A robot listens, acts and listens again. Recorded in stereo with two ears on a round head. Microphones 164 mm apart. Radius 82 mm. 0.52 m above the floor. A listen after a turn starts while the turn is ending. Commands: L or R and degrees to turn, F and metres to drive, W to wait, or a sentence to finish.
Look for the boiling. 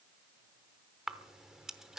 W
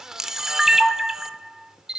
W
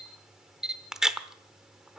I can't make out boiling, only a camera shutter.